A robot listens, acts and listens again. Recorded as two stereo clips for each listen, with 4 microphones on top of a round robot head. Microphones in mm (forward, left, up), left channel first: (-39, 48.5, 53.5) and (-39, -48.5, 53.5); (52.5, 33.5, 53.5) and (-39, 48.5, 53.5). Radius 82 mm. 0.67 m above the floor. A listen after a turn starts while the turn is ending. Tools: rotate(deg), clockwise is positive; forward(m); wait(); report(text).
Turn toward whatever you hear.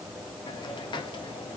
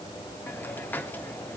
rotate(-55)
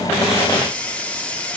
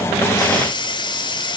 rotate(-10)
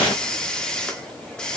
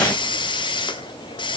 report("Facing the hiss, 1 to 2 m away.")